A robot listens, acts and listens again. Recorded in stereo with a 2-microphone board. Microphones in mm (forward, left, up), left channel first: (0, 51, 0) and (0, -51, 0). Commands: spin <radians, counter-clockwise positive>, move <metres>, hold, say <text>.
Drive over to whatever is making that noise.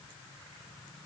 hold
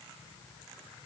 hold
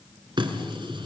spin -0.87
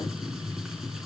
move 1.0
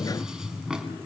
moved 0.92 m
move 1.0
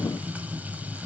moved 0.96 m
spin -0.35
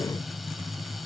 move 1.0
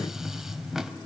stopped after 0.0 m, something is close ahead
say Arrived at the running tap, straight ahead.